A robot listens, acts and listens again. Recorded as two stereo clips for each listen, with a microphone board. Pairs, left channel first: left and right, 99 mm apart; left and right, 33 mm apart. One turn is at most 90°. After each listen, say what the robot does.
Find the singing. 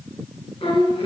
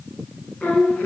Turn 70° left.
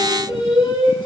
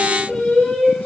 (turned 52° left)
Turn 60° left.
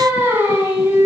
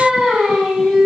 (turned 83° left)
Turn 15° right.
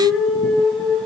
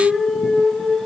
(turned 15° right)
Facing the singing, 1 to 2 m away.